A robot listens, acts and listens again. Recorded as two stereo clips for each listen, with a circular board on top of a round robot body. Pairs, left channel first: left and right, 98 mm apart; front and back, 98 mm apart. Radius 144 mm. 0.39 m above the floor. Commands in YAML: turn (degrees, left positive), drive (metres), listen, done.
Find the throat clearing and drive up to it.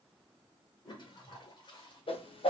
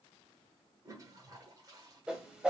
listen: true
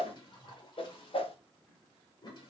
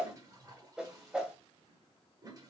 listen: true
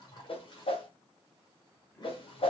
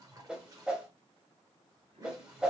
done: "I can't make out throat clearing, only a toilet flushing and a whoosh."